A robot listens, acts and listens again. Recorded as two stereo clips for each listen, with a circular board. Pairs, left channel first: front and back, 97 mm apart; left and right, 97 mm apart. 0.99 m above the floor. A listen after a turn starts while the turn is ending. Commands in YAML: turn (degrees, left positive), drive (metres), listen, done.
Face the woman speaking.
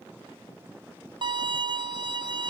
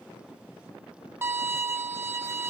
listen: true
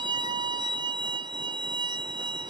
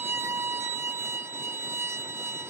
listen: true
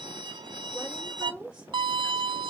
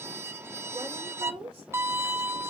turn: -95
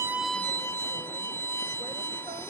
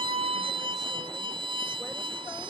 listen: true
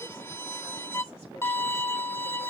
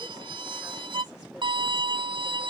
listen: true
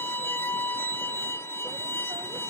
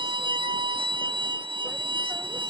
done: "Facing where the woman speaking came from. I can't hear it now."